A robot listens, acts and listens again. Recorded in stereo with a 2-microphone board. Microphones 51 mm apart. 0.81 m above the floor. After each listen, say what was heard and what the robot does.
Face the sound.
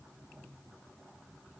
Keep listening.
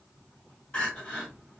The crying: about 20° left or 160° left. Turn 20° left.
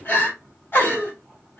So it is at 140° left. Turn 140° left.
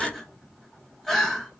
Found it: crying, straight ahead, 1 to 2 m away.